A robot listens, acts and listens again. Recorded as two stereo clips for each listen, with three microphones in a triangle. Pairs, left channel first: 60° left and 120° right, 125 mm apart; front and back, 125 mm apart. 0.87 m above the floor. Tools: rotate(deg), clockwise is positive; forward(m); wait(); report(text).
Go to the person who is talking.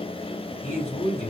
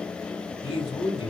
rotate(-45)
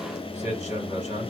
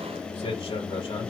rotate(-35)
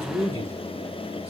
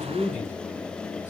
forward(1.0)
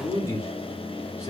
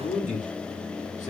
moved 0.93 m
forward(1.0)
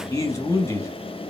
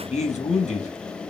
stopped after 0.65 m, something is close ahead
report("Arrived at the man speaking, straight ahead.")